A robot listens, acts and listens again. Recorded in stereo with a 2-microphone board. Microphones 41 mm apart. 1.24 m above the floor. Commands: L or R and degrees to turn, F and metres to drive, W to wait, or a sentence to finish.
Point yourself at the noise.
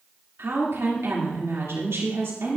R90
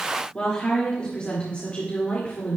L35
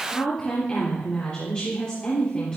L25
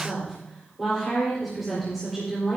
Facing the woman speaking, 2 to 4 m away.